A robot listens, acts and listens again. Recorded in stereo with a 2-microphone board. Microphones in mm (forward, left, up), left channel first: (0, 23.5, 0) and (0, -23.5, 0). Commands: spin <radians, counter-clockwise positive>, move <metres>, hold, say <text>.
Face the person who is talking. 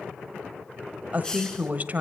spin -0.61
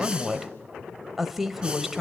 spin -0.17
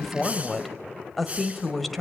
say Found it: a woman speaking, straight ahead, 1 to 2 m away.